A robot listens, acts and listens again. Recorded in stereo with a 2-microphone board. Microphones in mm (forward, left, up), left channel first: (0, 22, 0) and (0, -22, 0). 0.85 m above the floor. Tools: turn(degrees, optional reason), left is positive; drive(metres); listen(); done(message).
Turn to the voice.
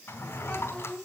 turn(degrees=20, reason="The child speaking: about 20° left or 160° left.")
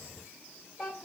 done("Facing the child speaking, 2 to 4 m away.")